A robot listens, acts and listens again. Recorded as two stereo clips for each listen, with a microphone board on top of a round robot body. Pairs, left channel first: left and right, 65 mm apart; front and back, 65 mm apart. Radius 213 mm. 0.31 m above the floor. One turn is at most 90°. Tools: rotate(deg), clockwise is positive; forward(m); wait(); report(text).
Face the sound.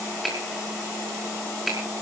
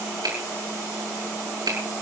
rotate(-90)
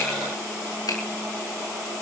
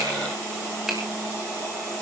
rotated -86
rotate(-90)
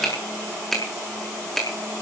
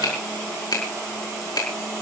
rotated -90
report("Found it: a finger snap, straight ahead, over 4 m away.")